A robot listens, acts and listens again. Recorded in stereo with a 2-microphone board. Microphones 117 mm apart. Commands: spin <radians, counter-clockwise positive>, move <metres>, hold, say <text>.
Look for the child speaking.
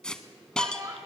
spin -0.61
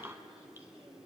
hold
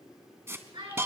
spin -2.27
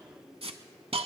hold
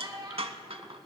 spin -0.79
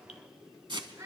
spin -0.52
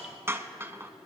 hold
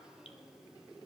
hold
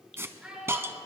say Facing the child speaking, over 4 m away.